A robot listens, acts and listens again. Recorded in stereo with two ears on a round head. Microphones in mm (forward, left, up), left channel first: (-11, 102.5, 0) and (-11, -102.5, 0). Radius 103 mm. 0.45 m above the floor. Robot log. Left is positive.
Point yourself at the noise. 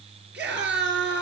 note: The scream: about 50° right or 130° right.
cmd yaw -50
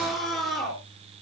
end: Found it: a scream, straight ahead.